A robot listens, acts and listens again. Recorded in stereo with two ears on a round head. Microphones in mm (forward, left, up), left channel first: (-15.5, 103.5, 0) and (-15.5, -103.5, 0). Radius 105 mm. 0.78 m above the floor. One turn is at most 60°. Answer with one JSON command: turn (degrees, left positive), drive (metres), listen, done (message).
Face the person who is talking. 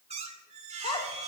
{"turn": 20}
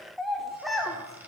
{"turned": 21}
{"done": "Facing the child speaking."}